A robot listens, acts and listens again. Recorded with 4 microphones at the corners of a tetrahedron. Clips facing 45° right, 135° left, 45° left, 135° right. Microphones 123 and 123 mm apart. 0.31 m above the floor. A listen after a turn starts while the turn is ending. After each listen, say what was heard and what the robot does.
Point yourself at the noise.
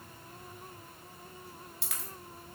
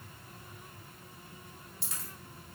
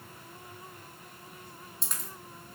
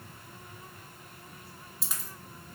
The dropped coin: 50° right. Turn 50° right.
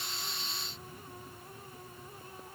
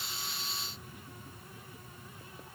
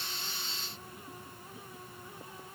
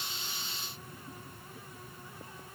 I heard a dropped coin from this way, but can't make it out now.